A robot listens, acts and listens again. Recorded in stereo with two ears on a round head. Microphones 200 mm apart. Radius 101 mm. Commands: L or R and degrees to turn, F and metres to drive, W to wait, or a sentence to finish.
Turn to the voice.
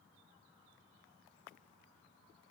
W
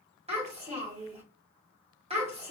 R30
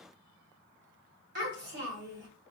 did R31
R115
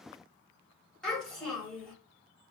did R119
Facing the child speaking.